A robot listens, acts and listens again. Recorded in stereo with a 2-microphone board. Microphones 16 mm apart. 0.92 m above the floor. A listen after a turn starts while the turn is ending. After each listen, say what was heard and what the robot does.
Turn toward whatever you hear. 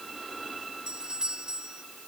The doorbell: about 65° right or 115° right. Turn 65° right.
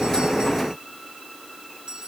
So it is at 50° right. Turn 50° right.
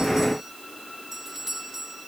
The doorbell is now 20° right. Turn 20° right.
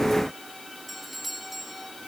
Found it: a doorbell, straight ahead.